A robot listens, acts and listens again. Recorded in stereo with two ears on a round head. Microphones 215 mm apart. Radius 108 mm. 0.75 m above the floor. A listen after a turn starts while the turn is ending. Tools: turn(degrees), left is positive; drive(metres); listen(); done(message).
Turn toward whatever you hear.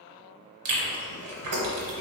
turn(degrees=-70)
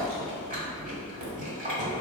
turn(degrees=-35)
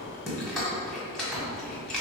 done("Facing the chewing.")